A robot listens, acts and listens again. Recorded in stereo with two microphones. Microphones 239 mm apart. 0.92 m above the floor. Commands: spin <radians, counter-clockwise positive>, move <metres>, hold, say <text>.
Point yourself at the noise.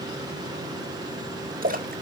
spin -0.61
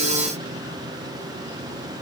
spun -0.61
hold
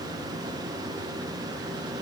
say I heard a splash, but can't make it out now. It was about straight ahead or 110° right.